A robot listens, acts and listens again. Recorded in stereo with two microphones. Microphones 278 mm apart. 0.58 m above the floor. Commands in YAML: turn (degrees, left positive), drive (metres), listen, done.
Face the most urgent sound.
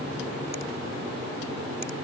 listen: true
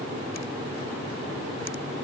listen: true
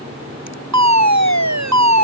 turn: -90
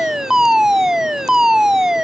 done: "Facing the fire alarm."